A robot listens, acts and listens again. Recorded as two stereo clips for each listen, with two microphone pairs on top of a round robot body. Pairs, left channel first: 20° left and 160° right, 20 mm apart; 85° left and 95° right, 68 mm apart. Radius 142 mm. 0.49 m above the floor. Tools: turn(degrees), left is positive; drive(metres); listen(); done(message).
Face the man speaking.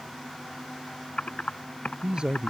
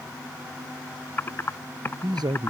turn(degrees=-115)
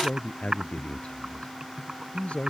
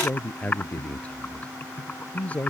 turn(degrees=15)
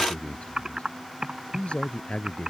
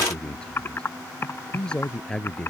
done("Facing the man speaking.")